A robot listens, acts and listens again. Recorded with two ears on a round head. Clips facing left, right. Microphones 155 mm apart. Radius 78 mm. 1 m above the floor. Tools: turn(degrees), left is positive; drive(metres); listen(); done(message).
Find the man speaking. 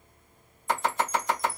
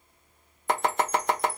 listen()
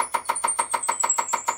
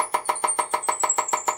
listen()
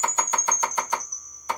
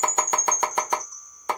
done("I can't make out a man speaking, only a chime and chopping.")